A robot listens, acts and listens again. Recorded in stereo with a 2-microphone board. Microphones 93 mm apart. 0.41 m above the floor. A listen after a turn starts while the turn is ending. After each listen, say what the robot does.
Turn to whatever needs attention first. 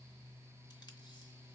Keep listening.
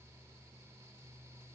Keep listening.
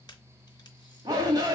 Turn 40° right.
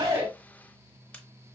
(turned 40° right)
Keep listening.
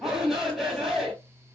Found it: a shout, straight ahead, 2 to 4 m away.